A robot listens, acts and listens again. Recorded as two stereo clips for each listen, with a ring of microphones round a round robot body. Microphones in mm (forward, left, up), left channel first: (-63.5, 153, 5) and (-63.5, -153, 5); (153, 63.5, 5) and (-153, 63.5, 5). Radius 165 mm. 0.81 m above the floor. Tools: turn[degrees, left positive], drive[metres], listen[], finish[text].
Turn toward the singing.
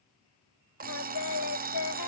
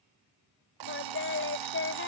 Thought: The singing: 50° left.
Action: turn[50]
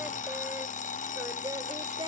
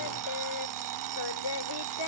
Thought: The singing is now 10° right.
Action: turn[-10]
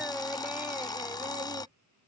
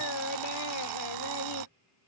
Action: finish[Facing the singing.]